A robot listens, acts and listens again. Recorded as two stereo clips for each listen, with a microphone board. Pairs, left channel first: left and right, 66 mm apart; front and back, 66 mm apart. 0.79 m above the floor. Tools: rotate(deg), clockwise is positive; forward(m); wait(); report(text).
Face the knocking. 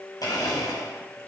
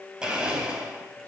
wait()
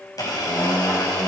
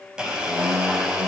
wait()
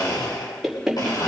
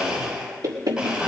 rotate(175)
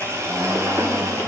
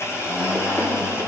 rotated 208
rotate(-35)
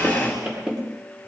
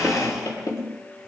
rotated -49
rotate(15)
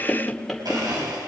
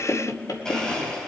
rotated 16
report("Facing the knocking.")